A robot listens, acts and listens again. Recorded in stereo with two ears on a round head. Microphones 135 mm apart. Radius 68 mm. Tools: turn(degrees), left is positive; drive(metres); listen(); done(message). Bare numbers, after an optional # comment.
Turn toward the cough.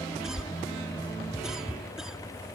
turn(-30)
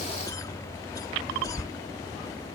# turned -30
# So it is at 25° left.
turn(25)
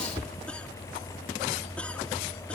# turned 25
# The cough is now 10° left.
turn(10)
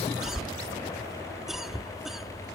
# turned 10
done("Found it: a cough, straight ahead.")